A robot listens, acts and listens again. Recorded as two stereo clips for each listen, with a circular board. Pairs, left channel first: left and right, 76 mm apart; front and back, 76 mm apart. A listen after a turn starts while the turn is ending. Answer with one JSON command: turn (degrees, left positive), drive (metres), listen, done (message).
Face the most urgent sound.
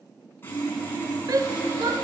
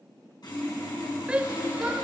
{"turn": -110}
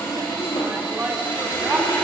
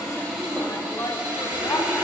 {"turn": -30}
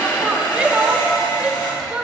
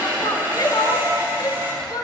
{"turn": -15}
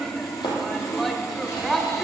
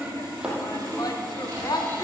{"done": "Found it: a shout, straight ahead."}